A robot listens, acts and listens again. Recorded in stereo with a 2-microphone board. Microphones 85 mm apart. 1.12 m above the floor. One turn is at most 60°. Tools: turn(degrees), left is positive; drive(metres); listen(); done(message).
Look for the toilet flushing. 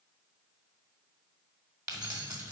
listen()
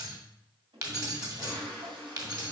turn(degrees=-60)
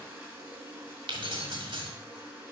turn(degrees=-20)
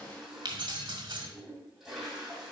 done("Found it: a toilet flushing, straight ahead, 2 to 4 m away.")